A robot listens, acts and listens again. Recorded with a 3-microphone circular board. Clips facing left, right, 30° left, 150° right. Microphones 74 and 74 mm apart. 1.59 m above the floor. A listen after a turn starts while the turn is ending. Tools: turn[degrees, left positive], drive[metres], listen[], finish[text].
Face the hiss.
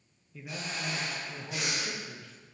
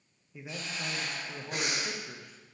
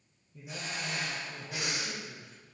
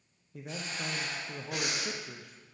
Thought: The hiss: 110° left.
Action: turn[110]
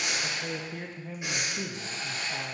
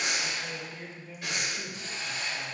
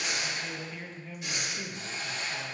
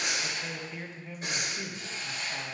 Thought: The hiss is now 45° left.
Action: turn[45]
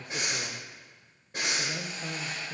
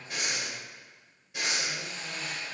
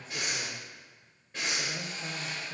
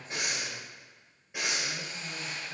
Thought: The hiss is now 15° left.
Action: turn[15]
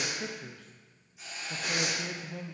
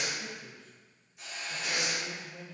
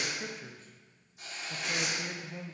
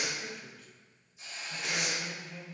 Action: finish[Found it: a hiss, straight ahead.]